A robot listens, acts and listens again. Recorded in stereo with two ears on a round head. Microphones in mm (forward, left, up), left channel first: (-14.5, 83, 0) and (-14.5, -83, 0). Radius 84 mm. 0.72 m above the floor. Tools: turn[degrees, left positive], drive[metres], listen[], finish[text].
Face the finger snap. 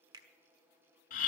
Thought: The finger snap: about 25° right or 155° right.
Action: turn[-25]
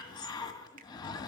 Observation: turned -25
Action: listen[]
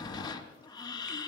Action: listen[]
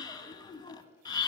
Action: finish[I heard a finger snap, but can't make it out now. It was about straight ahead or 130° right.]